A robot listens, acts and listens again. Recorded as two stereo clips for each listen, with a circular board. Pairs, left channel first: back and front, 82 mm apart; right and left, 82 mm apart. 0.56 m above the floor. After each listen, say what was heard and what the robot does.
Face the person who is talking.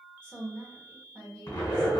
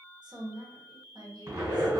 The woman speaking: 110° left. Turn 110° left.
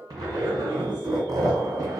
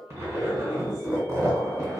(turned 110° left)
Keep listening.
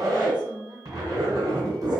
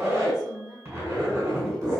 Found it: a woman speaking, straight ahead.